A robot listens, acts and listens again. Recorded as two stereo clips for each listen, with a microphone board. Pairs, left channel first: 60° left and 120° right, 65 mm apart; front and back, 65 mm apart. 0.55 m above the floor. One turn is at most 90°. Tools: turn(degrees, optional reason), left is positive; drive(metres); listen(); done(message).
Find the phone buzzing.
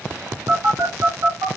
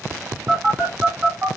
turn(degrees=-90, reason="The phone buzzing: 110° right.")
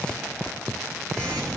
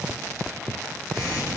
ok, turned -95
turn(degrees=-15, reason="The phone buzzing is now 15° right.")
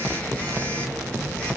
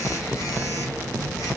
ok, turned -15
done("Found it: a phone buzzing, straight ahead, 1 to 2 m away.")